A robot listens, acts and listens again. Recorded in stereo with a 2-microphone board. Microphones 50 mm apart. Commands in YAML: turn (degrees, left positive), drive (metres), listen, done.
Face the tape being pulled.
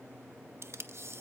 turn: -60
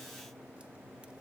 listen: true
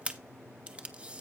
turn: -25
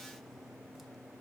listen: true
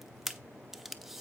done: "Facing the tape being pulled."